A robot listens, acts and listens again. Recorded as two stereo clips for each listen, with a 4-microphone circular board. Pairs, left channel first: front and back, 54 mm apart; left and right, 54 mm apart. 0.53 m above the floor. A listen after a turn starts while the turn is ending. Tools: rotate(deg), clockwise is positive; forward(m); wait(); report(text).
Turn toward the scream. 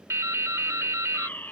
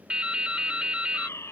wait()
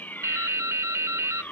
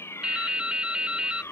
wait()
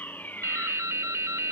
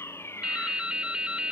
report("I can't make out a scream to turn to.")